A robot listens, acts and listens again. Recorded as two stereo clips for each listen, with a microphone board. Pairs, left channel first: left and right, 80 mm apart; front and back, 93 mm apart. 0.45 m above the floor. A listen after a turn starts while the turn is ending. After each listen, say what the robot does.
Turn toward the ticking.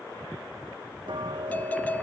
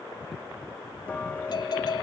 Turn 75° right.
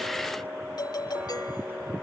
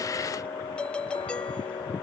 Turn 25° right.
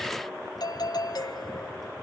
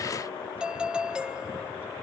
Keep listening.
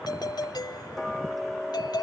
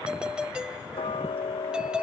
Found it: ticking, straight ahead.